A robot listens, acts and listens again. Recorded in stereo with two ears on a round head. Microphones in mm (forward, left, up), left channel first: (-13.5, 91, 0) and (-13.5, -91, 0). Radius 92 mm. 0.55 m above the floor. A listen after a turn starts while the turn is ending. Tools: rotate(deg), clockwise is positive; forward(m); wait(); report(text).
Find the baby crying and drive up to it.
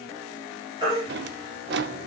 rotate(25)
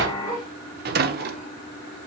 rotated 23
wait()
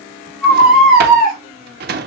forward(1.0)
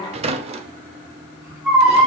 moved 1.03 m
forward(1.0)
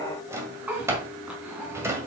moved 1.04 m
forward(1.0)
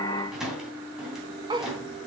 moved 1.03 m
wait()
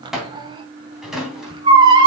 rotate(25)
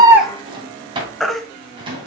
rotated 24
forward(1.0)
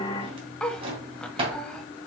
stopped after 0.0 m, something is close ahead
wait()
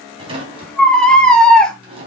report("Arrived at the baby crying, straight ahead.")